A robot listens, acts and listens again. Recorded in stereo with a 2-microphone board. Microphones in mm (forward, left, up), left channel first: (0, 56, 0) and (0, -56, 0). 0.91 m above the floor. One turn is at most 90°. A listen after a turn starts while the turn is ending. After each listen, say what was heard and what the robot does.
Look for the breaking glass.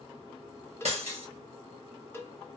The breaking glass: about 75° right or 105° right. Turn 75° right.
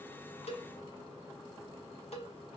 Keep listening.
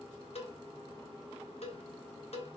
I heard breaking glass, but can't make it out now. It was about straight ahead or 30° right.